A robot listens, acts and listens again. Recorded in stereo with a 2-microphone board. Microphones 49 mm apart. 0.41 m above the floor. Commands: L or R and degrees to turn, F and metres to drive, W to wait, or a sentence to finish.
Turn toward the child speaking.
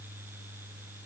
W
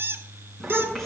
L30
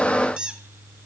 W
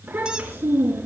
R35
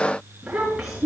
R10
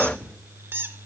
W
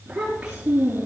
R10
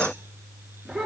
Facing the child speaking, over 4 m away.